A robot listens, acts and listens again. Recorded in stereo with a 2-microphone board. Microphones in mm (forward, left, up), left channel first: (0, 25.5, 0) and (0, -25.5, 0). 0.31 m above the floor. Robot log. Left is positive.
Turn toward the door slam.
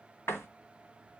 note: The door slam: about 55° left or 125° left.
cmd yaw +55
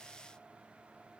cmd idle
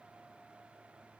end: I heard a door slam, but can't make it out now. It was about straight ahead or 70° left.